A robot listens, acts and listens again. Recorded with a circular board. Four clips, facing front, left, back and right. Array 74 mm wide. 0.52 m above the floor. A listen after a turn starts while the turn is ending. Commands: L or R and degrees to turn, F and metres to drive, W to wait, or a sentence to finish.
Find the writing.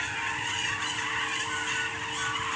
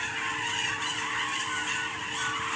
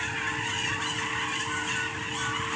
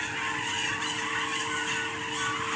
W
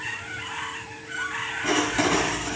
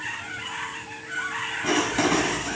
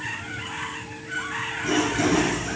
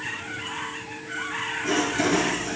L50
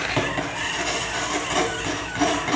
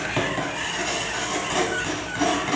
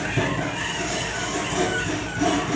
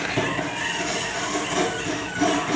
L30
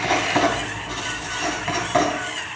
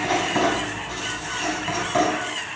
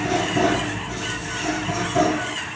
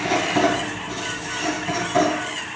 L10
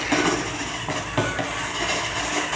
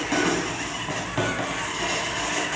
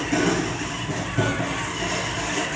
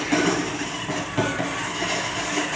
Facing the writing.